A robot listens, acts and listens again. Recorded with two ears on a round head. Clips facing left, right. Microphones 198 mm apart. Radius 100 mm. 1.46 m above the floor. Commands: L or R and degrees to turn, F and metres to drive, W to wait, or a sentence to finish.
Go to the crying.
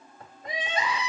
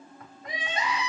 L90
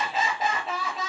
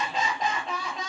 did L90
F1.0
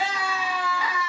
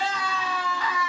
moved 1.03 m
L10
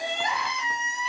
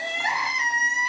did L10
F1.0
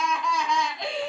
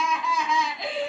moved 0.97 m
F1.0
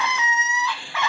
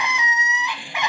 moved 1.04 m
R20
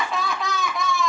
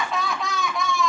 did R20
F1.0
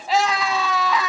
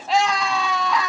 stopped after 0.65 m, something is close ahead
I am next to the crying.